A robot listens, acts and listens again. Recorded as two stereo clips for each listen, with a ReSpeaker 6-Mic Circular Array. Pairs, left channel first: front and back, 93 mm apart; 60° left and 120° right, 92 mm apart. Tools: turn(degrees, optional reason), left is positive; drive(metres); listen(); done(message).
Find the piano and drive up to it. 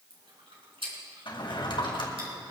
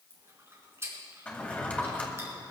listen()
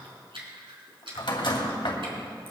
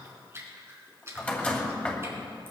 listen()
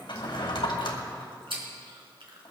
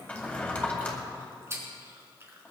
done("I can't make out a piano to turn to.")